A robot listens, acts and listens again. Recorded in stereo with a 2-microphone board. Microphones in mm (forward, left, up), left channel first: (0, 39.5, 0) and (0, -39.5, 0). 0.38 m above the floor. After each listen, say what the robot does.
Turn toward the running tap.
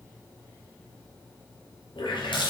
Turn 90° left.
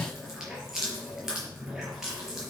Facing the running tap.